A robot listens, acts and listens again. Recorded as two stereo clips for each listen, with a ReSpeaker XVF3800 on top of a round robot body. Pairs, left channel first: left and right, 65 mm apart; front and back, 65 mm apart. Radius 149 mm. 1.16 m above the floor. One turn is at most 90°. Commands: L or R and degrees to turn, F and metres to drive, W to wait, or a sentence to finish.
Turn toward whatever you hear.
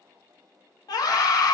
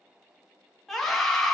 L85
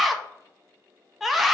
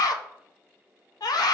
Found it: a scream, straight ahead, under 1 m away.